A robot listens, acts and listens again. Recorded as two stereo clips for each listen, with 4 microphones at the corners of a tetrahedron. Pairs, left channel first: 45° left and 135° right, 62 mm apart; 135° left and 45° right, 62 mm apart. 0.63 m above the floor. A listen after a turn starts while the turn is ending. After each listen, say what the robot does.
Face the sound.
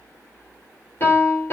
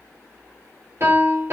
Turn 10° right.
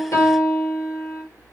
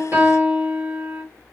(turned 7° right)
Facing the piano.